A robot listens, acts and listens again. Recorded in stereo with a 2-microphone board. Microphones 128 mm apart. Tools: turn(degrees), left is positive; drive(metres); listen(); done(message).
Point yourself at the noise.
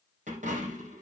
turn(degrees=-75)
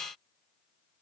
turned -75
listen()
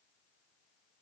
done("I heard a dropped coin, but can't make it out now. It was about straight ahead or 30° right.")